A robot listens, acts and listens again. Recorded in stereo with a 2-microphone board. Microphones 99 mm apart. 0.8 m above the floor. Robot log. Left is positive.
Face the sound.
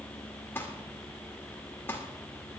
note: The crumpling: about 20° left or 160° left.
cmd yaw +20
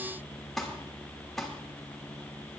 end: Facing the crumpling, 2 to 4 m away.